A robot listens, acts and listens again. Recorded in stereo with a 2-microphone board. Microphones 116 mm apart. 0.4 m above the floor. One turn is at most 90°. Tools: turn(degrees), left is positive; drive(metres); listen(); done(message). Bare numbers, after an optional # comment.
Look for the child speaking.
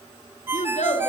turn(90)
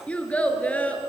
# So it is at 15° left.
turn(15)
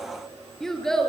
done("Facing the child speaking.")